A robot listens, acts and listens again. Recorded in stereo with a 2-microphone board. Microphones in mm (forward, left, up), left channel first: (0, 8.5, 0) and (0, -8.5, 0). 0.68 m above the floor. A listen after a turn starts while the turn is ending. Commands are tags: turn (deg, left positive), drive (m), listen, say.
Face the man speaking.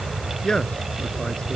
<turn deg="55"/>
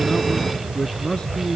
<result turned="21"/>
<turn deg="100"/>
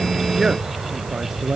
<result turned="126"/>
<turn deg="-25"/>
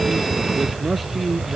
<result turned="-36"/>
<say>Facing the man speaking.</say>